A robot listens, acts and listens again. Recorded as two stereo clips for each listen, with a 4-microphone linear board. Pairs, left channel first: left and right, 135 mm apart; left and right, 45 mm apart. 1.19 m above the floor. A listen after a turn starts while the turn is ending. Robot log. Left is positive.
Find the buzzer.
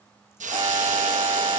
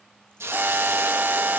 note: The buzzer: about 40° right or 140° right.
cmd yaw -40
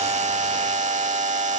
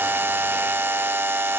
note: So it is at 95° right.
cmd yaw -95
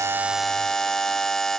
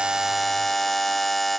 end: Found it: a buzzer, straight ahead.